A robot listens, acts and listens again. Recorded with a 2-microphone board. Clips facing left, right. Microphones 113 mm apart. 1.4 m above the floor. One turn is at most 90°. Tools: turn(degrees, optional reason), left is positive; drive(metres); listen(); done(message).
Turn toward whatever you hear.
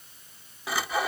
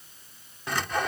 turn(degrees=30)
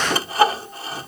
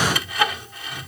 turn(degrees=90, reason="So it is at 145° left.")
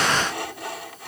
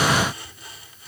turn(degrees=75, reason="The sawing is now 75° left.")
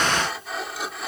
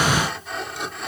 done("Facing the sawing.")